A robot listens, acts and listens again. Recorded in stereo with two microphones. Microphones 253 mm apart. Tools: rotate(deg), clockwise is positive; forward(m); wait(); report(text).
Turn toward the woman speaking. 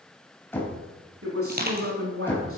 rotate(60)
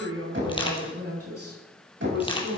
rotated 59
rotate(75)
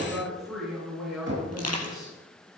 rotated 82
report("Facing the woman speaking.")